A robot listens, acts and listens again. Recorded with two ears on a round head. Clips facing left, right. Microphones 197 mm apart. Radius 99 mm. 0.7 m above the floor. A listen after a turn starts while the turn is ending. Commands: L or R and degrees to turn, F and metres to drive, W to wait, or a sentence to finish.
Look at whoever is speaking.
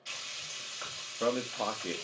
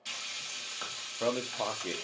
L30
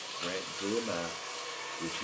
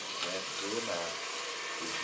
W
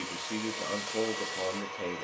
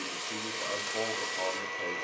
W
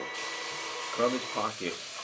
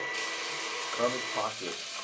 L145
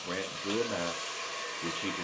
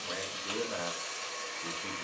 L65
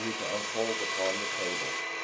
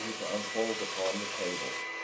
W
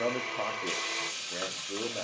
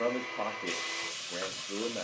Found it: a man speaking, straight ahead.